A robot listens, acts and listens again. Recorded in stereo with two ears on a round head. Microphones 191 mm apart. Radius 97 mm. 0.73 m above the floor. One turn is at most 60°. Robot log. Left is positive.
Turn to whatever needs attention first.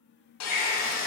note: The baby crying: about 45° left or 135° left.
cmd yaw +45
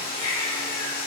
note: So it is at 90° left.
cmd yaw +60
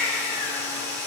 note: The baby crying is now 35° left.
cmd yaw +35
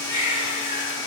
note: The baby crying is now 15° right.
cmd yaw -15
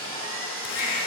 note: The baby crying is now 10° right.
cmd yaw -10
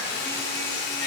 cmd idle
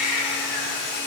end: Found it: a baby crying, straight ahead, 2 to 4 m away.